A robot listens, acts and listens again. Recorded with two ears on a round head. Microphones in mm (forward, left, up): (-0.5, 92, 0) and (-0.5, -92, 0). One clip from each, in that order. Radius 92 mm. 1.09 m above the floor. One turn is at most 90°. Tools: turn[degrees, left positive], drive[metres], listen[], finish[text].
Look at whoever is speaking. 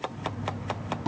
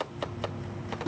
Action: listen[]
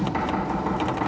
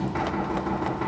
Action: listen[]
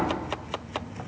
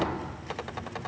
Action: finish[I can't make out anyone speaking, only knocking.]